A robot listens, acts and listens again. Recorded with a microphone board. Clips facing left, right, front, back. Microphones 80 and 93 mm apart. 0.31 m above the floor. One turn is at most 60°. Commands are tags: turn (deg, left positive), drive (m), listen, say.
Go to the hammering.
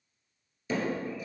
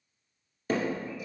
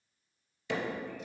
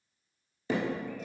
<turn deg="-60"/>
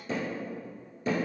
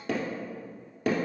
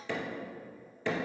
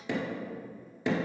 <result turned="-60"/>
<turn deg="-60"/>
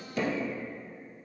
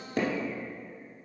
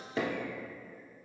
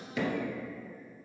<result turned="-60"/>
<turn deg="-55"/>
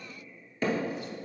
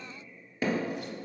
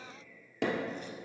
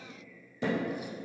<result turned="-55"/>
<turn deg="-10"/>
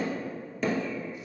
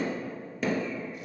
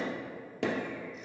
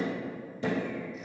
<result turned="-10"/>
<drive m="1.0"/>
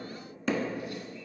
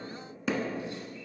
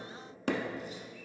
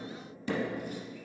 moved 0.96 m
<drive m="1.0"/>
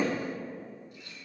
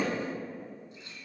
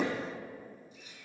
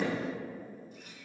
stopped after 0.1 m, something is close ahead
<say>Arrived at the hammering, straight ahead.</say>